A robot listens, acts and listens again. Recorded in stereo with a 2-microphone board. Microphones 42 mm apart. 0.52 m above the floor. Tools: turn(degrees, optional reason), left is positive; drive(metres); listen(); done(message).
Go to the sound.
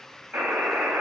turn(degrees=-70, reason="The buzzer: about 70° right or 110° right.")
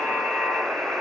turn(degrees=-35, reason="So it is at 35° right.")
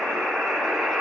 turn(degrees=-20, reason="The buzzer is now 20° right.")
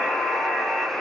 drive(metres=1.0)
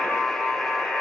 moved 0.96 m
drive(metres=1.0)
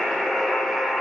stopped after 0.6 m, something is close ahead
done("Arrived at the buzzer, straight ahead.")